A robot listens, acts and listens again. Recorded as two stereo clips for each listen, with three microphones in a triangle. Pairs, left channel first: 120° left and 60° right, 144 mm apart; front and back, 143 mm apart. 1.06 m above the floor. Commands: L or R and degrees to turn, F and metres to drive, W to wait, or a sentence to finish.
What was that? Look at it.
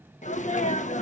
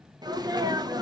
L125
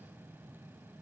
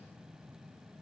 I heard a sneeze from this way, but can't make it out now.